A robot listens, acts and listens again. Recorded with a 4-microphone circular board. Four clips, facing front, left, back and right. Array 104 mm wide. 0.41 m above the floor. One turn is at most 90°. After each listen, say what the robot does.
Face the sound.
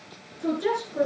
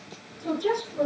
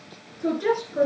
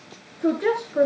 Turn 90° right.
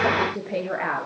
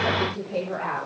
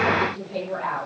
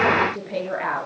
Turn 20° right.
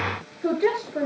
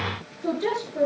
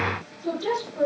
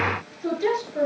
Found it: a woman speaking, straight ahead.